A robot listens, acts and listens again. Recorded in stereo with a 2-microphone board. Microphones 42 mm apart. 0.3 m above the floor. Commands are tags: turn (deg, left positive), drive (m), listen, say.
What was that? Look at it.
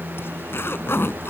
<turn deg="70"/>
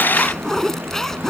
<turn deg="10"/>
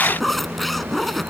<say>Found it: a zipper, straight ahead.</say>